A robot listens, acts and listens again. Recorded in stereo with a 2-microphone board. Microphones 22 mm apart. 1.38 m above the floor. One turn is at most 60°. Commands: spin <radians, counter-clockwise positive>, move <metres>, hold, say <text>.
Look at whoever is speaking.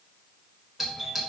hold
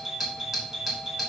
hold
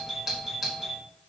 say I can't make out anyone speaking to turn to.